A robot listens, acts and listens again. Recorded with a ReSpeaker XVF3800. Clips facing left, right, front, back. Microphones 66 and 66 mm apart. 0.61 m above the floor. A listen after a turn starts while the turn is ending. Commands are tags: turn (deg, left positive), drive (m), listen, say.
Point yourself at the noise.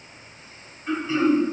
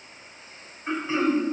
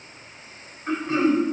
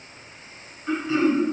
<turn deg="-30"/>
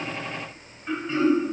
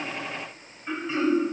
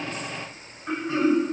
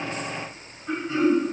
<say>Facing the throat clearing.</say>